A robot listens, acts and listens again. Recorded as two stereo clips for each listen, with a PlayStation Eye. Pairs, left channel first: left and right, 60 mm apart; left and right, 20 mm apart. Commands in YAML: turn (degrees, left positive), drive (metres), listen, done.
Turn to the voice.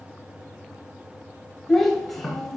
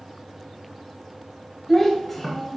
turn: 30
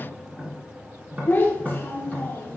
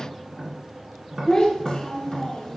turn: 145
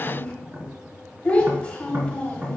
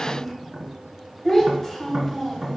turn: 25
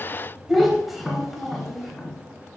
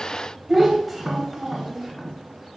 done: "Facing the child speaking, 2 to 4 m away."